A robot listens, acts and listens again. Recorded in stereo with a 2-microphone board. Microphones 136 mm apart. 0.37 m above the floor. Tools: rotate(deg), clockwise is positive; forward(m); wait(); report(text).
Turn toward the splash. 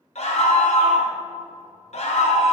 wait()
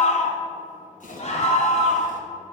rotate(-90)
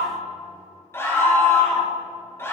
report("Facing where the splash came from. I can't hear it now.")